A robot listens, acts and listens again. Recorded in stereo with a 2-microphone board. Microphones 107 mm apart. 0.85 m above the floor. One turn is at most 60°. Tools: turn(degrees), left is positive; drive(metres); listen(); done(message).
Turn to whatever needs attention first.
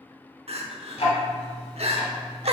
turn(degrees=-60)
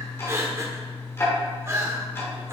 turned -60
turn(degrees=-30)
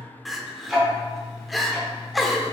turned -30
done("Facing the crying.")